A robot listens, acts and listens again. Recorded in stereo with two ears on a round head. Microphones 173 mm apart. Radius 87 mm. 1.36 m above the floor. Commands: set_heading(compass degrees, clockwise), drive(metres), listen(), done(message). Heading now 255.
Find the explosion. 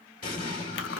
set_heading(210)
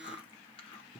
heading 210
listen()
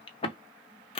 done("I heard an explosion, but can't make it out now. It was about straight ahead or 90° left.")